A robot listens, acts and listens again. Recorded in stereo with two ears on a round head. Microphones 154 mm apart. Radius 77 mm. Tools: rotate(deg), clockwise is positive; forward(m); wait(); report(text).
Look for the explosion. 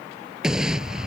rotate(30)
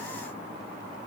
wait()
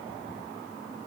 report("I heard an explosion, but can't make it out now. It was about 25° left or 145° right.")